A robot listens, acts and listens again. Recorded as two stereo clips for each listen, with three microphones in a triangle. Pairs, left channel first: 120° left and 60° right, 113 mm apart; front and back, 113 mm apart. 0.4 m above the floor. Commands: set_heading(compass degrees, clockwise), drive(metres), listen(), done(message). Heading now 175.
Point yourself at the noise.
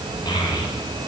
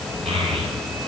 set_heading(5)
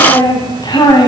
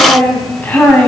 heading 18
set_heading(303)
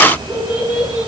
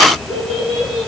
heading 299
set_heading(279)
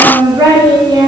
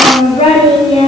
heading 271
set_heading(281)
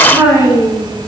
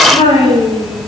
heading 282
done("Found it: a child speaking, straight ahead.")